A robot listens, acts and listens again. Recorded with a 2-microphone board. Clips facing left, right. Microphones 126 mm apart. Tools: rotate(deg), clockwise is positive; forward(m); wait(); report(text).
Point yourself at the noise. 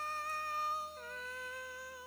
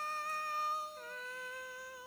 wait()
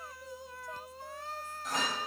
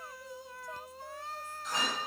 rotate(-50)
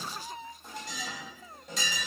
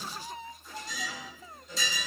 rotate(-80)
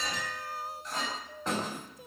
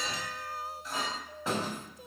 report("Facing the clink, over 4 m away.")